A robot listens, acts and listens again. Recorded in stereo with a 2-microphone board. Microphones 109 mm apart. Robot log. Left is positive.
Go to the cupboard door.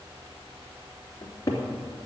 note: The cupboard door: about 30° left or 150° left.
cmd yaw +30
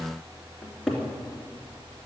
cmd fwd 1.0
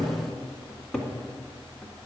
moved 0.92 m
note: The cupboard door is now 10° left.
cmd yaw +10
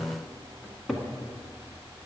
cmd fwd 1.0
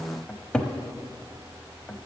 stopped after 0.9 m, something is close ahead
note: The cupboard door is now 10° left.
cmd yaw +10
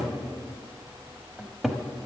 end: Arrived at the cupboard door, straight ahead.